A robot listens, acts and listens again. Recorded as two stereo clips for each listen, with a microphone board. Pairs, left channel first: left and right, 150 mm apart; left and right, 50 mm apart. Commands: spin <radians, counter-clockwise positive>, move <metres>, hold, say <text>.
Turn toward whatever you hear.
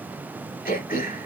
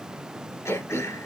spin 1.57
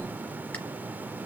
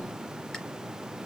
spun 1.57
hold
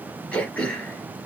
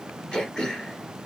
spin 0.17
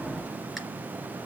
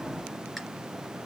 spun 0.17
hold
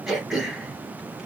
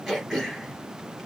say Facing the throat clearing, 2 to 4 m away.